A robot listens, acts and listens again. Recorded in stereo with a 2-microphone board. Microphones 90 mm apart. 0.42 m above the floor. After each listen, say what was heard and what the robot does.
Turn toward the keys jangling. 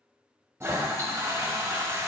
Keep listening.
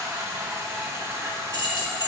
The keys jangling: about 55° left or 125° left. Turn 55° left.
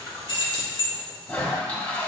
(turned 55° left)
So it is at 65° left. Turn 65° left.
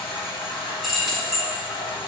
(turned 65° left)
Facing the keys jangling.